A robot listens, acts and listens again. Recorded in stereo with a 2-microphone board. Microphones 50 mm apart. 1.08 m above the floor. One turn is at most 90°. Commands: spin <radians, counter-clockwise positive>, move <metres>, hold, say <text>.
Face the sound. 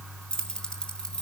spin 0.52
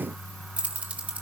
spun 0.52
spin -0.52
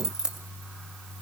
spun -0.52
spin -0.26
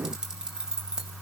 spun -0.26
spin -0.26
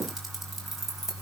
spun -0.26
spin -0.17
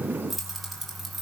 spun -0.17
say Found it: keys jangling, straight ahead, over 4 m away.